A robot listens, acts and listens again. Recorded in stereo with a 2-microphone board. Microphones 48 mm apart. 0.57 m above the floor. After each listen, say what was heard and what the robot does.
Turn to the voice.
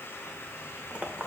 Keep listening.
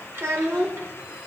The child speaking: about 70° right or 110° right. Turn 70° right.
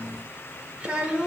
So it is at 25° right. Turn 25° right.
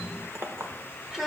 Found it: a child speaking, straight ahead.